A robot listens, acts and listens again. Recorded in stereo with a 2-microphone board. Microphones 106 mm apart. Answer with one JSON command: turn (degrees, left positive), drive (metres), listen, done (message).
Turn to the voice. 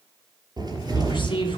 {"turn": 55}
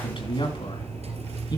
{"turn": 50}
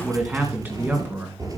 {"turn": -25}
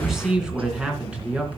{"turn": -10}
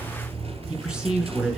{"done": "Found it: a man speaking, straight ahead, 2 to 4 m away."}